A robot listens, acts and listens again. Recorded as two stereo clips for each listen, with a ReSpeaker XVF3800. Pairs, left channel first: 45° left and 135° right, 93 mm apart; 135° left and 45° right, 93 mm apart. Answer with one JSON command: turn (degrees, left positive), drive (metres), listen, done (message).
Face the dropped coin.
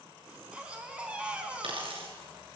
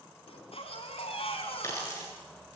{"turn": -165}
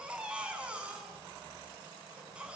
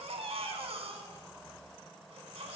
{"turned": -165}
{"done": "I heard a dropped coin from this way, but can't make it out now."}